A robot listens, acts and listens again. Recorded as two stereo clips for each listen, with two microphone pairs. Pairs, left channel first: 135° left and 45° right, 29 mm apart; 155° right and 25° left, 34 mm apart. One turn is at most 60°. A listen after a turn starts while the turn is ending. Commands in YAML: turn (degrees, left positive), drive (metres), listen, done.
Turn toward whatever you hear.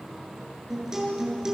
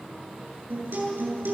turn: 20
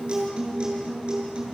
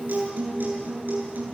done: "Facing the guitar, over 4 m away."